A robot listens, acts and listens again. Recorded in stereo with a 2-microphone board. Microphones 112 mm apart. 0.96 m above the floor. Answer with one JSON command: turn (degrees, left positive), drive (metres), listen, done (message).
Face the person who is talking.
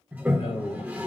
{"turn": 70}
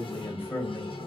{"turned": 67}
{"turn": 20}
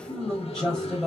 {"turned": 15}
{"done": "Facing the man speaking, 2 to 4 m away."}